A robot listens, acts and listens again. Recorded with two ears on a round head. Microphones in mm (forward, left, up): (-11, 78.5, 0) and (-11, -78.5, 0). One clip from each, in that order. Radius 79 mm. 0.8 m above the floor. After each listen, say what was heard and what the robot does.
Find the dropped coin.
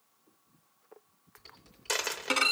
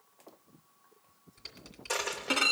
Turn 90° left.
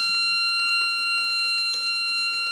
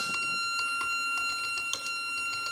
Facing where the dropped coin came from. I can't hear it now.